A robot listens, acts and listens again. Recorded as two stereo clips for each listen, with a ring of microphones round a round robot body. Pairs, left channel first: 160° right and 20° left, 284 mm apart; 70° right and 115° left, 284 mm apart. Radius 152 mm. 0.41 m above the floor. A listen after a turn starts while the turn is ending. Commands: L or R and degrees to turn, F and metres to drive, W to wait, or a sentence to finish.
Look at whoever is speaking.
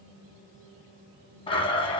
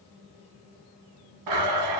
W
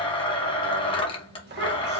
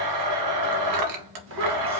L75
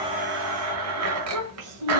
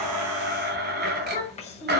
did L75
Found it: a child speaking, straight ahead, 1 to 2 m away.